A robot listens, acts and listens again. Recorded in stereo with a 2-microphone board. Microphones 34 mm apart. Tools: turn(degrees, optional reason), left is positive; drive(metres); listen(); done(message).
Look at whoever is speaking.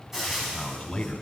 turn(degrees=20, reason="The man speaking: about 20° left or 160° left.")
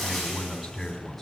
done("Facing the man speaking, 2 to 4 m away.")